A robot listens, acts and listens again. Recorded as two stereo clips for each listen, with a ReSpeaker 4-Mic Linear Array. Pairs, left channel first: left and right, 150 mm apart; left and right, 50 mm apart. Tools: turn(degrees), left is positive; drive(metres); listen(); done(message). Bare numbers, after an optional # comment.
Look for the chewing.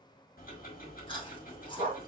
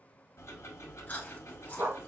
# The chewing: about 35° left or 145° left.
turn(35)
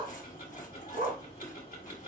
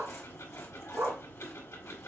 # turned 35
listen()
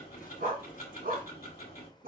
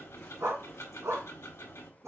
listen()
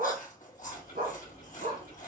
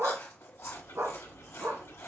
# So it is at 110° left.
turn(110)
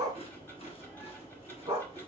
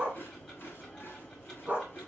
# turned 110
listen()
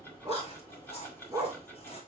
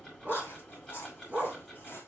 # The chewing is now 45° left.
turn(45)
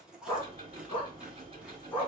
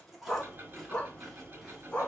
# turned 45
done("Facing the chewing.")